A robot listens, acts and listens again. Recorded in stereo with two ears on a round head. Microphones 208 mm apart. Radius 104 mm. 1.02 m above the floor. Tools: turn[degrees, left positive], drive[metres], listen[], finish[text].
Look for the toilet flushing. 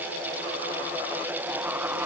Action: listen[]
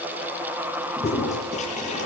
Thought: The toilet flushing: about 30° left or 150° left.
Action: turn[30]
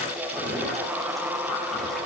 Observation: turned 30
Action: listen[]
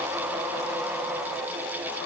Action: listen[]
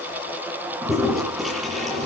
Action: finish[Facing the toilet flushing.]